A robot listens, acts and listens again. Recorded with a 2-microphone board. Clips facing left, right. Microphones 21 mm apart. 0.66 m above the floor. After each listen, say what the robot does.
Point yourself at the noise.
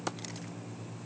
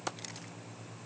Keep listening.
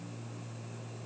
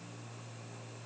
Keep listening.
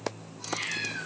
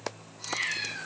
Turn 20° right.
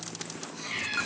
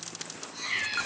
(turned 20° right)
Turn 145° right.
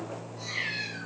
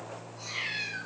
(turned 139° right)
Found it: a cat meowing, straight ahead, 1 to 2 m away.